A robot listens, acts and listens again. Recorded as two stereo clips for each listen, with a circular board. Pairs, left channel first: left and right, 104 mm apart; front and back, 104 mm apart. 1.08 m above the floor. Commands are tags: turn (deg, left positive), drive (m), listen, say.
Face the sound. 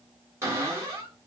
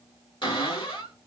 <turn deg="-30"/>
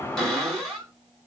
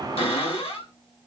<say>Found it: a cupboard door, straight ahead.</say>